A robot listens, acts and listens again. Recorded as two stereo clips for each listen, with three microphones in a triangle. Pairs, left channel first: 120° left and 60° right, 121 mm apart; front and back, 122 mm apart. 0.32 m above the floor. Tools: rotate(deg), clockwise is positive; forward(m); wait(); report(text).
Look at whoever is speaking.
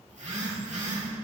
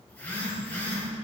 wait()
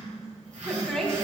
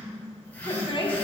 rotate(-35)
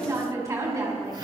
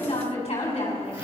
report("Facing the woman speaking.")